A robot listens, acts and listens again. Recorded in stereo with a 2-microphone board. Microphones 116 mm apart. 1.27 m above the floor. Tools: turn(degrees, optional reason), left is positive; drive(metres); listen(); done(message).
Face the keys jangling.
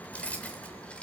turn(degrees=30)
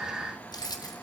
turn(degrees=145, reason="So it is at 145° left.")
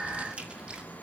turn(degrees=-10, reason="The keys jangling is now 10° right.")
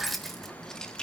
turn(degrees=10, reason="The keys jangling is now 10° left.")
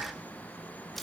done("Facing the keys jangling.")